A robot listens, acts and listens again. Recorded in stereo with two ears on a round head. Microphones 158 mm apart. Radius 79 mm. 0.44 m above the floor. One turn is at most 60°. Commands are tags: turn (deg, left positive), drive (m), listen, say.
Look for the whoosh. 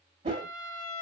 <turn deg="-35"/>
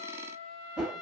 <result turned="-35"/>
<turn deg="-10"/>
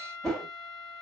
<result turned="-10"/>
<say>Facing the whoosh.</say>